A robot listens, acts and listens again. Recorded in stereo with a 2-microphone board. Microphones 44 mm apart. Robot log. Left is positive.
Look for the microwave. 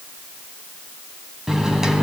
cmd yaw -30
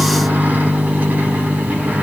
note: So it is at 135° right.
cmd yaw -135
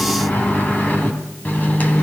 note: The microwave is now 45° left.
cmd yaw +45
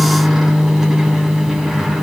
note: The microwave is now 10° right.
cmd yaw -10
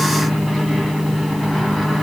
end: Found it: a microwave, straight ahead, 2 to 4 m away.